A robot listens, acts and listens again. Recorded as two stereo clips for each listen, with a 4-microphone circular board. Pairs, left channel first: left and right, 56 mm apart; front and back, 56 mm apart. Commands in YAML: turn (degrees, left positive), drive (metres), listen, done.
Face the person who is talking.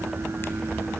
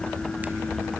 listen: true
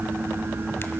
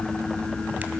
listen: true
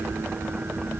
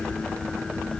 done: "I can't make out anyone speaking to turn to."